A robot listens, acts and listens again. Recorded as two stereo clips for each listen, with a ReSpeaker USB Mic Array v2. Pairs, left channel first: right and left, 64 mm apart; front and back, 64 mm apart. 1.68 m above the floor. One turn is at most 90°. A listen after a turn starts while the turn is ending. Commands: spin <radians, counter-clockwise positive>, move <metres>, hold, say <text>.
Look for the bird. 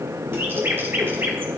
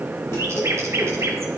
spin 1.57
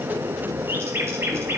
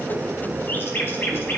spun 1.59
spin 0.87
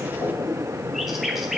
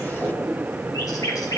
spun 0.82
say Facing the bird, 1 to 2 m away.